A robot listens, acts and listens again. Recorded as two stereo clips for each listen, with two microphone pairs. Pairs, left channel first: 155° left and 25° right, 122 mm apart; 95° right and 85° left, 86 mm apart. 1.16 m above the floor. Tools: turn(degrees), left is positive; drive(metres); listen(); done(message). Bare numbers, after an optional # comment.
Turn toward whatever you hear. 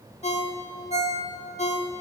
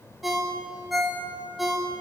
# The ringtone: 170° left.
turn(170)
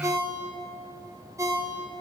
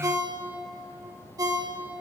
# The ringtone is now 40° left.
turn(40)
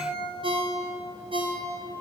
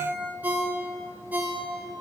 # The ringtone is now 15° left.
turn(15)
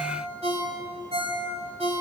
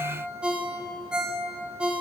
done("Found it: a ringtone, straight ahead, 1 to 2 m away.")